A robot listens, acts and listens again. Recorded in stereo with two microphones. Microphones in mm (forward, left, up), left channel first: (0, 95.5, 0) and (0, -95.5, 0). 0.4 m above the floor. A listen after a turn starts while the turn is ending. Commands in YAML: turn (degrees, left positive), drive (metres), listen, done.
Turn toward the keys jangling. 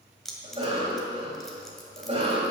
turn: 30
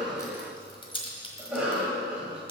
turn: 150
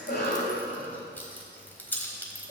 turn: 10
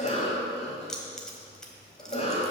done: "Facing the keys jangling."